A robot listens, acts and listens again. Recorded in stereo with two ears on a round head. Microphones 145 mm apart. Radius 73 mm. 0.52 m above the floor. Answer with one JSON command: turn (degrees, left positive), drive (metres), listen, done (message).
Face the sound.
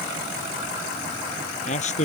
{"turn": 45}
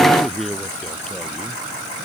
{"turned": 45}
{"done": "Facing the man speaking."}